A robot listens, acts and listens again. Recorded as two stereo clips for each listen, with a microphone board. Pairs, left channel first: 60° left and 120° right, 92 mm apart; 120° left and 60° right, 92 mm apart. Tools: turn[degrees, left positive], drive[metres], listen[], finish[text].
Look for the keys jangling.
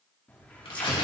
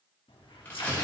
Thought: The keys jangling: 135° left.
Action: turn[135]
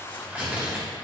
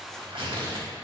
Action: listen[]
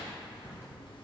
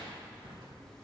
Thought: The keys jangling is now 35° left.
Action: turn[35]
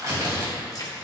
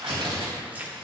Thought: The keys jangling is now 10° left.
Action: turn[10]
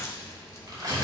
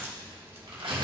Action: finish[Found it: keys jangling, straight ahead, 1 to 2 m away.]